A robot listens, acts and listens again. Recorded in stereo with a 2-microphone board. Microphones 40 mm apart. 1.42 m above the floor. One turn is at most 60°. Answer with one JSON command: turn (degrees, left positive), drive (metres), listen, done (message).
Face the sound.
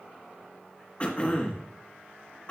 {"turn": 35}
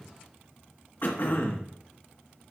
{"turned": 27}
{"turn": 60}
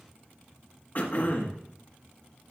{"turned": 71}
{"turn": 45}
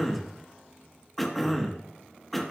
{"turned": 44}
{"done": "Facing the throat clearing, 1 to 2 m away."}